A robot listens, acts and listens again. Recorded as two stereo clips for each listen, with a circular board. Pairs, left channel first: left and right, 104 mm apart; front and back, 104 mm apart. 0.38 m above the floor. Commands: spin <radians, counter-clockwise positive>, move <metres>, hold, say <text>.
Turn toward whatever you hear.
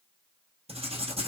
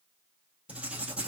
spin -1.75
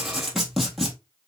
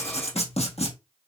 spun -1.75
say Found it: writing, straight ahead, 1 to 2 m away.